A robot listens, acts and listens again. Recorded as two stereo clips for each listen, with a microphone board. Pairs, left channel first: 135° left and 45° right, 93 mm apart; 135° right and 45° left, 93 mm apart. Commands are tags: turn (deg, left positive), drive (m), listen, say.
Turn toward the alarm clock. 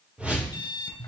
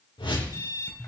<turn deg="175"/>
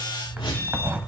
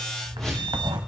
<listen/>
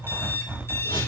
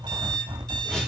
<turn deg="75"/>
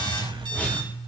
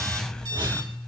<listen/>
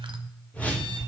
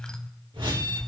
<listen/>
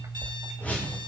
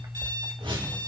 <say>Found it: an alarm clock, straight ahead, 1 to 2 m away.</say>